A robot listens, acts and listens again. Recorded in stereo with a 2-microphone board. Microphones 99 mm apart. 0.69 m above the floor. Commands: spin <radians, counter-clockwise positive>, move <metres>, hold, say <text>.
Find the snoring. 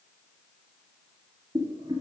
hold
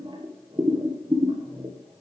hold
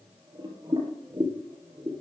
say I can't make out snoring to turn to.